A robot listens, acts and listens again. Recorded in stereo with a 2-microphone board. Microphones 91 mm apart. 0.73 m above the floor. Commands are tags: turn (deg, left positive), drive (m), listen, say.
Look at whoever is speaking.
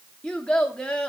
<turn deg="30"/>
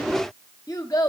<turn deg="140"/>
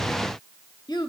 <turn deg="55"/>
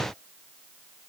<listen/>
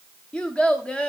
<turn deg="10"/>
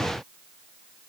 <listen/>
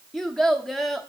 <say>Facing the child speaking, under 1 m away.</say>